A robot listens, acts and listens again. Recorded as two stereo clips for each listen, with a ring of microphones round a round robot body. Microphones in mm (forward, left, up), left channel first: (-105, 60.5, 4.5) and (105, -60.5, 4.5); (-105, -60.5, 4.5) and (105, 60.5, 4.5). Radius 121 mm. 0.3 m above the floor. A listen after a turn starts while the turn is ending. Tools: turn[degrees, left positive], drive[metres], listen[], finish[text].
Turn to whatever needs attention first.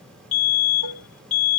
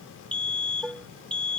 Thought: The fire alarm: 125° left.
Action: turn[125]
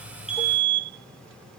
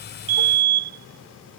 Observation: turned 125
Thought: The fire alarm is now 20° left.
Action: turn[20]
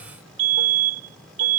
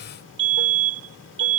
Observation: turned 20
Action: finish[Found it: a fire alarm, straight ahead.]